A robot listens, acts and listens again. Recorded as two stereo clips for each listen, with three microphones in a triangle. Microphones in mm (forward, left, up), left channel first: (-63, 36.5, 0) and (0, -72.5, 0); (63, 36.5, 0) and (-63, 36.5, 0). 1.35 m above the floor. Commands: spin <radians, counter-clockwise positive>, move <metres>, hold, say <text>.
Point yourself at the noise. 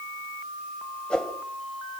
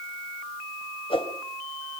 spin 0.61
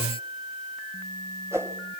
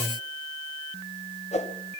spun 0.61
say Found it: a whoosh, straight ahead.